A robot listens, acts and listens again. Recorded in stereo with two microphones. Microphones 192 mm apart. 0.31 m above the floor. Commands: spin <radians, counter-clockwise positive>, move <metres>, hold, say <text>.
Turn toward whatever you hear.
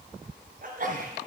spin -0.87
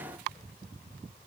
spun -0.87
hold
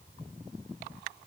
say I heard a sneeze, but can't make it out now. It was about straight ahead or 80° right.